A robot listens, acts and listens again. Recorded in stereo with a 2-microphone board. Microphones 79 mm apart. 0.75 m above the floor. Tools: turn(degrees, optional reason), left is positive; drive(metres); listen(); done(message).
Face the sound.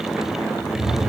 turn(degrees=90)
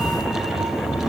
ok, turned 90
done("Found it: a cat meowing, straight ahead.")